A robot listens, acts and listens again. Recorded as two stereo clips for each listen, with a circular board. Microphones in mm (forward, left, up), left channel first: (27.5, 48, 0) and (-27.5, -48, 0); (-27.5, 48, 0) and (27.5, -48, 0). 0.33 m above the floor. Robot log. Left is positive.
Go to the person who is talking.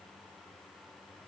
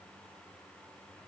cmd idle
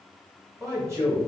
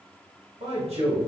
note: The man speaking: 60° right.
cmd yaw -60
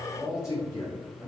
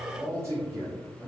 cmd fwd 1.0
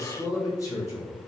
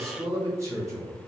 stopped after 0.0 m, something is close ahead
end: Something is in my way. I am facing the man speaking but have not reached it.